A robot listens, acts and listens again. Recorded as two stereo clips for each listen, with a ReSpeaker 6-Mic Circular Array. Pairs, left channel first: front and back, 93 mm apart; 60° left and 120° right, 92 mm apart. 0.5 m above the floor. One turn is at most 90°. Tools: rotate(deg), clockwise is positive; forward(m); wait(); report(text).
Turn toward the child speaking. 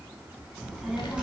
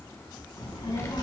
rotate(-90)
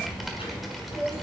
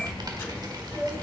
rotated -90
report("Found it: a child speaking, straight ahead.")